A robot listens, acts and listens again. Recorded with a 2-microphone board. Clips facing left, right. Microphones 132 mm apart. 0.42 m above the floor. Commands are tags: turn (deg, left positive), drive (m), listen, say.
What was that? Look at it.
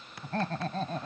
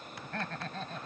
<turn deg="40"/>
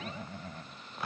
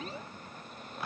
<turn deg="115"/>
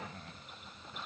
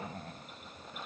<turn deg="-35"/>
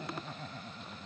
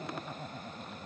<turn deg="-15"/>
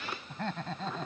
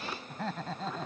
<say>Facing the laughter.</say>